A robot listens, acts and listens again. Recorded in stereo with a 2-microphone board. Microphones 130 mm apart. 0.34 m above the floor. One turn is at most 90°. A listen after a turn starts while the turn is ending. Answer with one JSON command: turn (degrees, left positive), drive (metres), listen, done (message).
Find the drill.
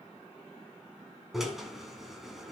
{"turn": 30}
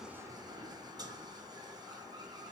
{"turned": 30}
{"turn": -35}
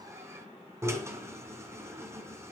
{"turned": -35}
{"turn": -20}
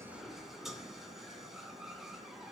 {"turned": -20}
{"done": "Facing the drill, 2 to 4 m away."}